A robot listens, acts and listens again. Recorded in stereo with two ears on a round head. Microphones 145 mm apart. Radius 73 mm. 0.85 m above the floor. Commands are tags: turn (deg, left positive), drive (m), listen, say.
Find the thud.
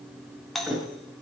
<turn deg="-30"/>
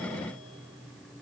<listen/>
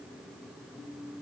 <say>I heard a thud, but can't make it out now. It was about 25° left or 145° right.</say>